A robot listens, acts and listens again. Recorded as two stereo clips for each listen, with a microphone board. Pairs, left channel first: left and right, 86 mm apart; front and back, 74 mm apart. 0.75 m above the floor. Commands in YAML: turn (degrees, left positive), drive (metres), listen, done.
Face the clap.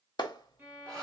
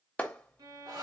turn: 70
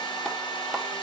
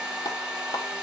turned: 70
done: "Found it: a clap, straight ahead."